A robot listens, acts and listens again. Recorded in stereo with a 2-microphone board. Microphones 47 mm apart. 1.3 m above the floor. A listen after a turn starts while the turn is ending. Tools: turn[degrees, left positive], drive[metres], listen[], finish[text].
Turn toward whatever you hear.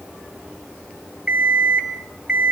Thought: The alarm clock: about 20° right or 160° right.
Action: turn[-20]
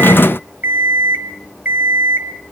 Thought: So it is at 135° right.
Action: turn[-135]
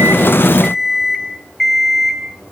Action: finish[Found it: an alarm clock, straight ahead.]